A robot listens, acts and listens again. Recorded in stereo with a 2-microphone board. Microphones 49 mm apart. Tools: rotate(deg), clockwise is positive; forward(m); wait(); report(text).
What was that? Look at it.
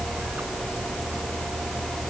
wait()
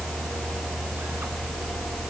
wait()
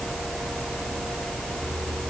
report("I can't make out anything.")